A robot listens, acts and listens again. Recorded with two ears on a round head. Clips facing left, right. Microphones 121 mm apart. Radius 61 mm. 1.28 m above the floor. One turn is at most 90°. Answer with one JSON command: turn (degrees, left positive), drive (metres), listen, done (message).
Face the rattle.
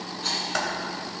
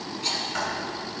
{"turn": -20}
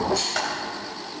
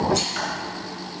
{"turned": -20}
{"turn": -90}
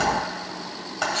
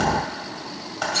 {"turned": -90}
{"turn": -70}
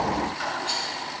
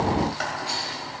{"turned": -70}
{"done": "Found it: a rattle, straight ahead, 2 to 4 m away."}